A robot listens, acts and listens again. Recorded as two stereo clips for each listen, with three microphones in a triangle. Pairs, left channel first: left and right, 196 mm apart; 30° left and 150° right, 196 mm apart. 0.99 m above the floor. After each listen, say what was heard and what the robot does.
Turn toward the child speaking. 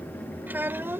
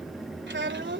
The child speaking: 170° right. Turn 170° right.
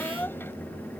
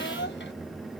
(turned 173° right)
Keep listening.
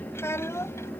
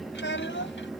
The child speaking is now 15° left. Turn 15° left.
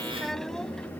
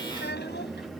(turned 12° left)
Keep listening.
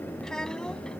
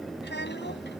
Keep listening.
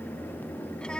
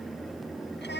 I heard a child speaking from this way, but can't make it out now.